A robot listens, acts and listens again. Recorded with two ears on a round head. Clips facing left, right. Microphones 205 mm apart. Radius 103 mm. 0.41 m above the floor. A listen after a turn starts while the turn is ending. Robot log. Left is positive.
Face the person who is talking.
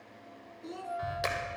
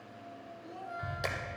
note: The child speaking: about 70° left or 110° left.
cmd yaw +70
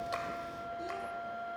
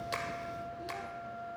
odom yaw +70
cmd idle
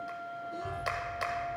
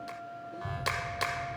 cmd idle
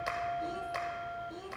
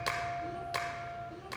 end: I heard a child speaking, but can't make it out now. It was about straight ahead or 40° left.